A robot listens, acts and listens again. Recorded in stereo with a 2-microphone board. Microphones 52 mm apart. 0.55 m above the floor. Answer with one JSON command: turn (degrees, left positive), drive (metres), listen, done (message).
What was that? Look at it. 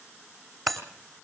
{"turn": 30}
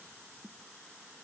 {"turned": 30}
{"listen": true}
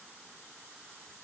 {"done": "I heard breaking glass, but can't make it out now. It was about 25° right or 145° left."}